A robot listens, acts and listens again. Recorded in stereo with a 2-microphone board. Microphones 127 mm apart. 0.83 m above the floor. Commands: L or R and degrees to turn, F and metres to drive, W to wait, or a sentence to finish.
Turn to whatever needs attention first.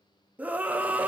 R30
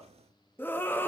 L15
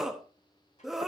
Facing the scream, under 1 m away.